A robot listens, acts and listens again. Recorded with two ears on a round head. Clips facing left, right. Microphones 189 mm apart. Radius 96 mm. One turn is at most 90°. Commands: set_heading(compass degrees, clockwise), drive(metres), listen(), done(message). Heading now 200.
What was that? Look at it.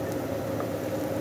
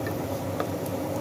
listen()
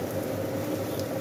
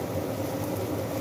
listen()
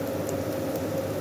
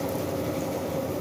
done("I can't make out anything to turn to.")